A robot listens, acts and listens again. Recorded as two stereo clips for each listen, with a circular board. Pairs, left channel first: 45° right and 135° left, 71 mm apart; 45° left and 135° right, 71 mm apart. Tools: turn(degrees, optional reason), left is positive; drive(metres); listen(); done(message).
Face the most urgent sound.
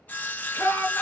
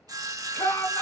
done("Facing the shout, 1 to 2 m away.")